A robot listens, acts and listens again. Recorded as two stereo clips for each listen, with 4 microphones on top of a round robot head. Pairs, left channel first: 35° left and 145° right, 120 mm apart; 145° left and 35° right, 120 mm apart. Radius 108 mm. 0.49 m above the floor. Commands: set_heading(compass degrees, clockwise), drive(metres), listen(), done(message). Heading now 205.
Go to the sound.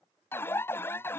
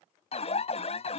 set_heading(100)
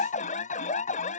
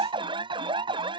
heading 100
set_heading(85)
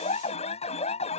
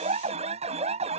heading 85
drive(1.0)
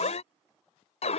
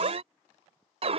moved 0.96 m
drive(1.0)
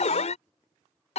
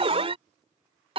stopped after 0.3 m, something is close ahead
done("I am next to the alarm.")